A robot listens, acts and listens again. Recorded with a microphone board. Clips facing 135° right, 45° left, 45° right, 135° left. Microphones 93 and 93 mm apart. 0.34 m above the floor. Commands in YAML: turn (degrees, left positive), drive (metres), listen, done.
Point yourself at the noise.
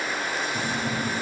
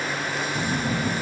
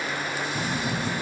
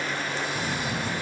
turn: -100
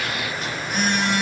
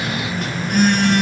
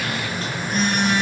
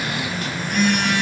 turn: 15
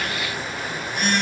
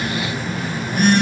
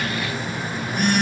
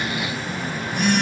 done: "Found it: a phone buzzing, straight ahead."